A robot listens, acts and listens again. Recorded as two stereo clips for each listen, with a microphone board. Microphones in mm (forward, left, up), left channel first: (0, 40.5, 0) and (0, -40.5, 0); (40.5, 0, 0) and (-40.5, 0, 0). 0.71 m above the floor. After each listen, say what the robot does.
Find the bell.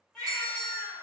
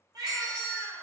Turn 105° right.
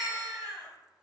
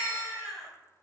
Keep listening.
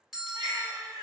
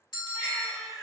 Facing the bell.